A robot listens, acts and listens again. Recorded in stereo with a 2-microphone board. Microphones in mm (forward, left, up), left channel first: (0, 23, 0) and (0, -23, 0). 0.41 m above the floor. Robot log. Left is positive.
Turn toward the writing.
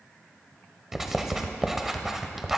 cmd yaw -30
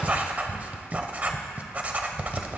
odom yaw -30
note: So it is at 145° right.
cmd yaw -145
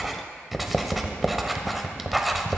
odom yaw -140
end: Found it: writing, straight ahead.